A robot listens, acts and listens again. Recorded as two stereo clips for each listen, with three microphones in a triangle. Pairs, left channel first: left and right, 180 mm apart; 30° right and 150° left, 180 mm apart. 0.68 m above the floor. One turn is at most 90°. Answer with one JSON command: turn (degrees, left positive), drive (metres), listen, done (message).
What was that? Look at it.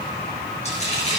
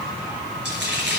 {"turn": 90}
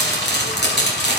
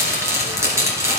{"turn": 75}
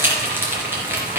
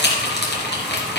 {"turn": -15}
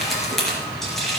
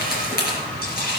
{"done": "Facing the frying, 2 to 4 m away."}